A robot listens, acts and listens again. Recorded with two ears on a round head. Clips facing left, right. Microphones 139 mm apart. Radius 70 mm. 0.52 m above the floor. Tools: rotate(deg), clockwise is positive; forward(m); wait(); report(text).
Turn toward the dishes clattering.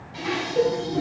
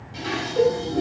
rotate(55)
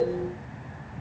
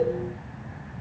wait()
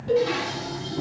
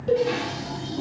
report("Found it: dishes clattering, straight ahead.")